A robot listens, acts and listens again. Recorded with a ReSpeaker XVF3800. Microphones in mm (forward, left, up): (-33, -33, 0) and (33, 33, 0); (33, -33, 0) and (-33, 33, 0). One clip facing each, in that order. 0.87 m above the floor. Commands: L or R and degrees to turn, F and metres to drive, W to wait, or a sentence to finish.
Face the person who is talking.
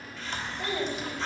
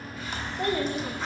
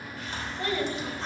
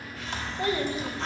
L65
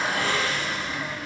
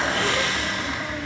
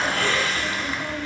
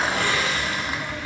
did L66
W
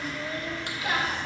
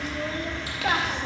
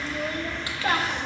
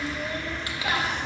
Found it: a child speaking, straight ahead, under 1 m away.